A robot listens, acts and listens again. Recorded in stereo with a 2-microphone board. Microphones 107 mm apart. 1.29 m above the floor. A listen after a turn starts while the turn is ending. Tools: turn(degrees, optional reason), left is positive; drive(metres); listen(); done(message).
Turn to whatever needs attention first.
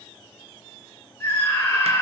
turn(degrees=20, reason="The scream: about 20° left or 160° left.")
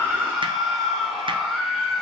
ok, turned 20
done("Facing the scream, 2 to 4 m away.")